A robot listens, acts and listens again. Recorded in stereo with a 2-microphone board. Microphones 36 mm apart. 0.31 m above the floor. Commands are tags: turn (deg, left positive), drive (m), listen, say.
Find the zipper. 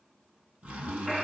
<turn deg="-50"/>
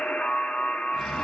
<listen/>
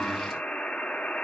<listen/>
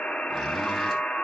<say>I heard a zipper, but can't make it out now. It was about straight ahead or 80° right.</say>